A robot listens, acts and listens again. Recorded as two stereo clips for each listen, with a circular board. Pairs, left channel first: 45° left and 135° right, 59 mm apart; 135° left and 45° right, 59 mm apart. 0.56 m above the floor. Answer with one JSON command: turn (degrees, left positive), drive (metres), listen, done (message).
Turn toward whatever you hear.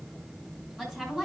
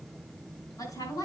{"turn": 135}
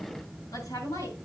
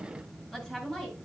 {"turn": 50}
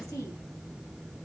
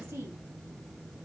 {"turn": 10}
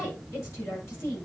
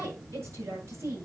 {"done": "Facing the woman speaking, over 4 m away."}